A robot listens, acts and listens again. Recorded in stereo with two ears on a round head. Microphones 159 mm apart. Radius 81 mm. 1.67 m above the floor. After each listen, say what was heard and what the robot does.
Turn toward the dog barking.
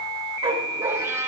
The dog barking: about 25° right or 155° right. Turn 25° right.
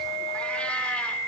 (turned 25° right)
Keep listening.
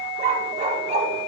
The dog barking: about 40° right or 140° right. Turn 40° right.
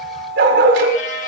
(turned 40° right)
So it is at 105° right. Turn 105° right.
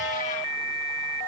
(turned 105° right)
Keep listening.
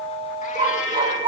The dog barking is now 25° right. Turn 25° right.
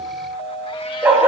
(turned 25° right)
The dog barking is now 10° right. Turn 10° right.
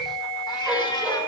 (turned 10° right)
Keep listening.
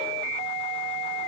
Keep listening.
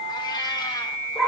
Facing the dog barking, over 4 m away.